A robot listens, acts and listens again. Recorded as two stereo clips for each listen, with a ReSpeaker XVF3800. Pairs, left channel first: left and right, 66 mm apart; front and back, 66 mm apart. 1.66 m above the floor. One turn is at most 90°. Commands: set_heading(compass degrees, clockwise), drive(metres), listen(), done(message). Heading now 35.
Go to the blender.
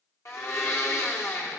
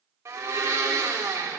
set_heading(305)
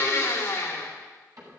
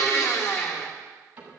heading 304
set_heading(259)
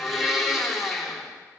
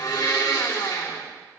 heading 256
drive(1.0)
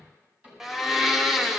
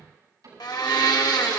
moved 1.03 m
drive(1.0)
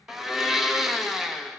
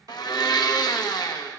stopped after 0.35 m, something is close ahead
done("Arrived at the blender, straight ahead.")